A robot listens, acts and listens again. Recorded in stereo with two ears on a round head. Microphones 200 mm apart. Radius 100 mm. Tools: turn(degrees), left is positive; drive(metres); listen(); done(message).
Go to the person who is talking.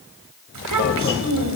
turn(degrees=-90)
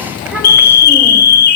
drive(metres=1.0)
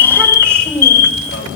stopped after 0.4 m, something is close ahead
turn(degrees=-10)
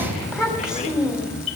done("Blocked. The child speaking is further on, straight ahead.")